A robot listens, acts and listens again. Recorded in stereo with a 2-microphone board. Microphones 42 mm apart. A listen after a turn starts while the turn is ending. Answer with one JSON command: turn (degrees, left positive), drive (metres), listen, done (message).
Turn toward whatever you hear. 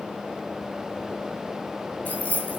{"turn": 40}
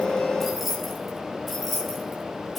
{"done": "Found it: keys jangling, straight ahead, over 4 m away."}